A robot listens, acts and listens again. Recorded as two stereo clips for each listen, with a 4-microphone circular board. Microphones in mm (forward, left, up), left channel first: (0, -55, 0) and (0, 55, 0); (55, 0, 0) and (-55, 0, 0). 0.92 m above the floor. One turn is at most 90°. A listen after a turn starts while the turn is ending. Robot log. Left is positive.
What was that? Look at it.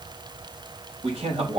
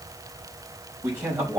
note: The man speaking: 115° left.
cmd yaw +90
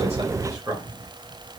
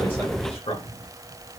note: The man speaking is now 35° left.
cmd yaw +35
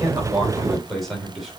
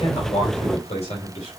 end: Facing the man speaking, 2 to 4 m away.